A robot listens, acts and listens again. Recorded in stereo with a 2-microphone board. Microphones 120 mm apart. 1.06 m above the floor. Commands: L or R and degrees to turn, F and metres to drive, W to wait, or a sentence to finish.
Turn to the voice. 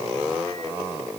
W
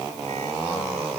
W
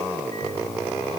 I can't make out anyone speaking to turn to.